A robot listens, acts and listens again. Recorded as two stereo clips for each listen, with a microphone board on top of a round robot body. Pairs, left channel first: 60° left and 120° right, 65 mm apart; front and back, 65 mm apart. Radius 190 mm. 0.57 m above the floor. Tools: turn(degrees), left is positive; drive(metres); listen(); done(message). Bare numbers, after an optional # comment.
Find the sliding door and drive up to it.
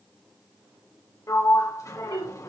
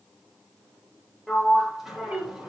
# The sliding door: 95° left.
turn(95)
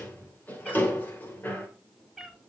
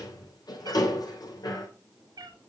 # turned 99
drive(1.0)
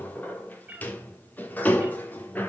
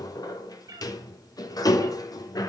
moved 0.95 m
drive(1.0)
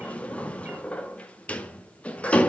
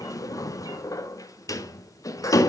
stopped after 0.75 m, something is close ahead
# The sliding door is now 10° right.
turn(-10)
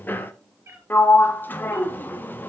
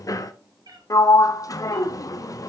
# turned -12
done("Arrived at the sliding door, straight ahead.")